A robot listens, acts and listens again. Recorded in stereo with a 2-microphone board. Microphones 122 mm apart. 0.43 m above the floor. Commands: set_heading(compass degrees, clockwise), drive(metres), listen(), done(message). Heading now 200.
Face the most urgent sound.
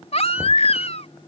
set_heading(140)
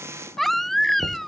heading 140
done("Found it: a baby crying, straight ahead.")